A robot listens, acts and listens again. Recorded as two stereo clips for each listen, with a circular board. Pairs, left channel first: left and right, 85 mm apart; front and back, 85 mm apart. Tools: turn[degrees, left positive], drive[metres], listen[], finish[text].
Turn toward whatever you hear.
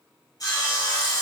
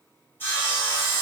Thought: The sawing: 60° left.
Action: turn[60]
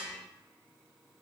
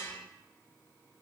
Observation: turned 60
Action: listen[]
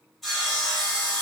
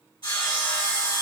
Action: finish[Facing the sawing, 1 to 2 m away.]